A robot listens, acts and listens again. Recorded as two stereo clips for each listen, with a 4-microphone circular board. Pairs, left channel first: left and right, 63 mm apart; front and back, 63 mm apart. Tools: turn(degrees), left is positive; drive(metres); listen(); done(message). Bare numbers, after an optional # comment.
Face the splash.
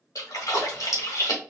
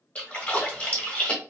# The splash: 70° left.
turn(70)
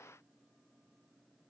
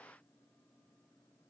done("Facing where the splash came from. I can't hear it now.")